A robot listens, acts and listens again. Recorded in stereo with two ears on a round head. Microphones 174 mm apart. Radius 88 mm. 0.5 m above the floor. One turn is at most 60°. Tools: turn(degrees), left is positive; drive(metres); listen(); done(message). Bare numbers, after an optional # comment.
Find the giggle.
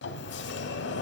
listen()
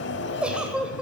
turn(-30)
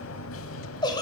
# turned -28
# So it is at 25° left.
turn(25)
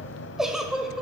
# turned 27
done("Found it: a giggle, straight ahead.")